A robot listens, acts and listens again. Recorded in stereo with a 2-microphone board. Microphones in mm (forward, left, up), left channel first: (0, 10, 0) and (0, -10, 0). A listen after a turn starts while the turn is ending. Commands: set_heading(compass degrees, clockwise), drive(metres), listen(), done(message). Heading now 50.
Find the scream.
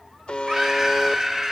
set_heading(80)
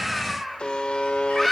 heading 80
set_heading(60)
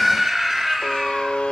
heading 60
done("Facing the scream, over 4 m away.")